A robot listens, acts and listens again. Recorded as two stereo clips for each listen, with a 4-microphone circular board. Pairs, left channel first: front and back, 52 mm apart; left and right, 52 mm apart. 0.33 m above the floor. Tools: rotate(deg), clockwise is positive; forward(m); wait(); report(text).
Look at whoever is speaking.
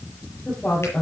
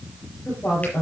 rotate(-75)
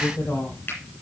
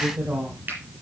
report("Facing the woman speaking.")